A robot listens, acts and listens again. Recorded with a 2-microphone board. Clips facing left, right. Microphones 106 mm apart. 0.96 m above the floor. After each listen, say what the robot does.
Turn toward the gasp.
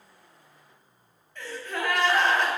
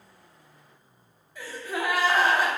Turn 30° right.
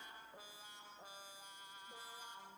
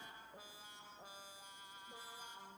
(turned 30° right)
Keep listening.
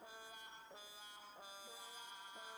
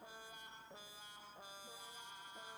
I heard a gasp, but can't make it out now. It was about 20° left or 140° right.